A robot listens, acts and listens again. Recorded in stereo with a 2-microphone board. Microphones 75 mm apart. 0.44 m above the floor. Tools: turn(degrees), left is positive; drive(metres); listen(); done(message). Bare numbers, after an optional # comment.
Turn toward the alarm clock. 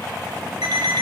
# The alarm clock: about 70° right or 110° right.
turn(-70)
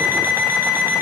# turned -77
# So it is at 30° right.
turn(-30)
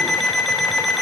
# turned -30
done("Facing the alarm clock, 1 to 2 m away.")